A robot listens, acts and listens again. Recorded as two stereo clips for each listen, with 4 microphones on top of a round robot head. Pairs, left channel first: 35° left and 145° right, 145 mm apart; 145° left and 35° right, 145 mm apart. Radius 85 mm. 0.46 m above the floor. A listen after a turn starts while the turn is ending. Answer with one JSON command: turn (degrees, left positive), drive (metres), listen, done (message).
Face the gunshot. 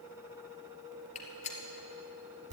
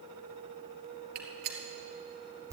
{"turn": -10}
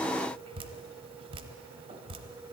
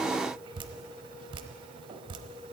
{"done": "I heard a gunshot from this way, but can't make it out now."}